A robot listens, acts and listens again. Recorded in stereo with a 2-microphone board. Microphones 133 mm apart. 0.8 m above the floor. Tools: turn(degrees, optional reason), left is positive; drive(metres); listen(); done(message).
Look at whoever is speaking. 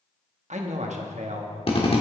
turn(degrees=-60, reason="The man speaking: about 60° right or 120° right.")
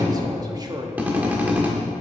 turn(degrees=-35, reason="So it is at 35° right.")
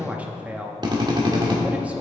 turn(degrees=-10, reason="The man speaking is now 10° right.")
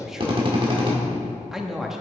done("Facing the man speaking.")